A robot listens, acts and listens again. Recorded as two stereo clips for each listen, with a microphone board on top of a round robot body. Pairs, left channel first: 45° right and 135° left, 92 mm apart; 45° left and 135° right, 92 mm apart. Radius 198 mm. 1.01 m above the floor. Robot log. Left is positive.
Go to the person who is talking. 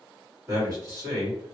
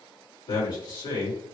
note: The man speaking: 80° left.
cmd yaw +80
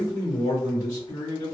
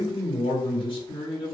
note: The man speaking is now 10° left.
cmd yaw +10
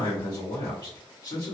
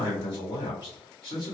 cmd fwd 1.0
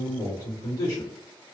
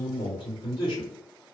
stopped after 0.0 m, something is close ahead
note: The man speaking is now 10° left.
cmd yaw +10
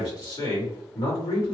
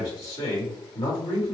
end: Blocked. The man speaking is further on, straight ahead.